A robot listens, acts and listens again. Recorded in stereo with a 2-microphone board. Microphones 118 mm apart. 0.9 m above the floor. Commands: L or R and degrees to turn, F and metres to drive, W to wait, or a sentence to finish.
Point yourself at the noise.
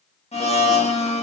L55
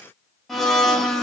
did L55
Found it: a blender, straight ahead.